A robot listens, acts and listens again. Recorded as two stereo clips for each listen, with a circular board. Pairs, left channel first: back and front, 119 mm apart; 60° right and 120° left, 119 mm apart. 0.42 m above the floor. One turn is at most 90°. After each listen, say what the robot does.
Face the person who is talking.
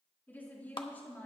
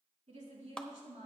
Turn 90° left.
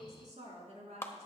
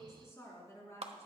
Facing the woman speaking, over 4 m away.